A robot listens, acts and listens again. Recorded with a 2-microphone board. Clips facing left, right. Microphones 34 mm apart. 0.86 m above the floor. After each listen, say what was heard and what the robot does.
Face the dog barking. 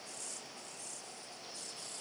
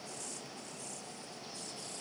Keep listening.
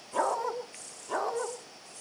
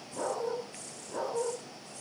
Turn 90° left.
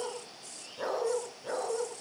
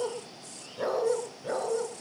Facing the dog barking, over 4 m away.